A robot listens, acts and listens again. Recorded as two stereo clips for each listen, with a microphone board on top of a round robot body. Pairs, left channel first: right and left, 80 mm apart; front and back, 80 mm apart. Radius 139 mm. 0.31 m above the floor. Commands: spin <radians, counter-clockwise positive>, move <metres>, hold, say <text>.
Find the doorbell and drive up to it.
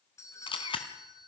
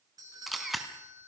spin -2.44
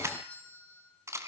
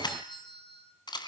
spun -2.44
spin -0.26
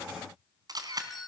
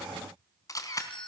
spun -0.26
move 1.0
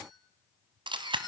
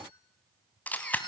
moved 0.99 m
hold
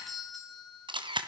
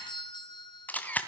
move 1.0
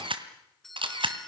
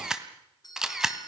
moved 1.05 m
move 1.0
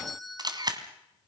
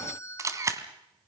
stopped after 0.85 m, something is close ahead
say I am next to the doorbell.